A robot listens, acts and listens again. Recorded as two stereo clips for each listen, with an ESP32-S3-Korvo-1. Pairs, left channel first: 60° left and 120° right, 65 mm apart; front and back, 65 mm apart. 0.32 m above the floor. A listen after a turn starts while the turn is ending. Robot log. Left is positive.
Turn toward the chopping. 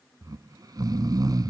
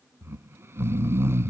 cmd idle
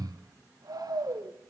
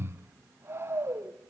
cmd idle
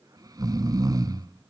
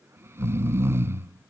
end: I can't make out chopping, only snoring.